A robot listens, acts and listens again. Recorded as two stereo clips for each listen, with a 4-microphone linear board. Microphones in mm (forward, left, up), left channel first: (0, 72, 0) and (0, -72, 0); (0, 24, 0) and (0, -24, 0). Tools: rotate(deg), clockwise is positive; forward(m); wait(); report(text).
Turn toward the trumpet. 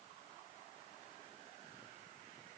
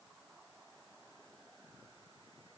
wait()
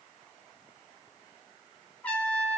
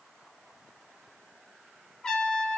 rotate(-30)
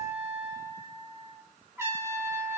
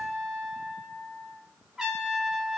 rotate(20)
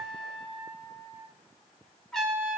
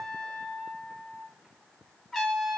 report("Found it: a trumpet, straight ahead, 2 to 4 m away.")